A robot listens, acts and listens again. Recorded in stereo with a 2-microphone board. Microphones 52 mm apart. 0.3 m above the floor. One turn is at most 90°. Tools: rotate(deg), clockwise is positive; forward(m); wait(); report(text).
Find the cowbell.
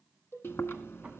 rotate(-50)
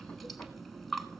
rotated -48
wait()
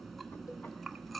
wait()
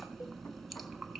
report("I heard a cowbell, but can't make it out now. It was about 5° left or 80° left.")